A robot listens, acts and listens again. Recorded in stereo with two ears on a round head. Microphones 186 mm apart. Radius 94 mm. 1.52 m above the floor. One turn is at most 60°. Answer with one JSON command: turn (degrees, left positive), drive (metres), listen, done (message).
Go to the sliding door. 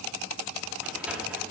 {"turn": -30}
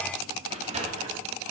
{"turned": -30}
{"turn": -60}
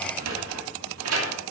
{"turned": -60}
{"turn": -60}
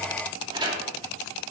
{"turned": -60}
{"turn": -20}
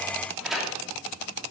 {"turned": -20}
{"drive": 1.0}
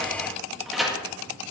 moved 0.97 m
{"drive": 1.0}
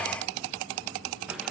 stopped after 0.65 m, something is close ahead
{"done": "Arrived at the sliding door, straight ahead."}